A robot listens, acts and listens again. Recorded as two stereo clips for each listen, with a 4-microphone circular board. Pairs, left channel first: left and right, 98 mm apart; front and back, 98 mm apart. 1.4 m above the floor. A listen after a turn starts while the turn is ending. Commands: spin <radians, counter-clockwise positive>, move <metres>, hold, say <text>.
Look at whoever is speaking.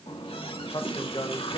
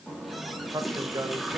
spin 2.18
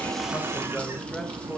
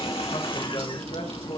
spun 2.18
hold
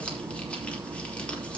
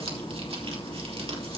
hold
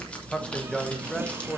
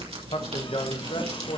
say Facing the man speaking.